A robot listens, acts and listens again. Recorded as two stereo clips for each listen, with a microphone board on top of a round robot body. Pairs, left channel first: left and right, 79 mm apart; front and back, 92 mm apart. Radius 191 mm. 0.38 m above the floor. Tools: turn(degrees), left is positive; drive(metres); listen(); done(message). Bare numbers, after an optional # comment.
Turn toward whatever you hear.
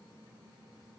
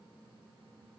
listen()
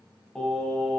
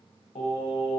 # The singing: 10° left.
turn(10)
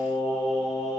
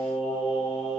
done("Facing the singing, 2 to 4 m away.")